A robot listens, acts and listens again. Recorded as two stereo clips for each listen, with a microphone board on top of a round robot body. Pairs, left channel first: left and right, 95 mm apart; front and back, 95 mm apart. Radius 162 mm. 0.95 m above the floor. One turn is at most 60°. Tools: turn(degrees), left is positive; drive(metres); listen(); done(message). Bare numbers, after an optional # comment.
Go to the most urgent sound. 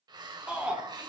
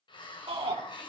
# The shout: 165° right.
turn(-60)
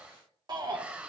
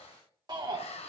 # The shout is now 135° right.
turn(-60)
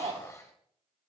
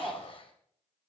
# The shout is now 90° right.
turn(-60)
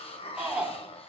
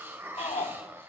# The shout is now 10° right.
turn(-10)
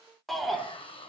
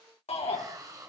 drive(1.0)
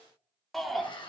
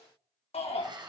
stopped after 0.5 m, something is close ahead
done("Blocked. The shout is further on, straight ahead.")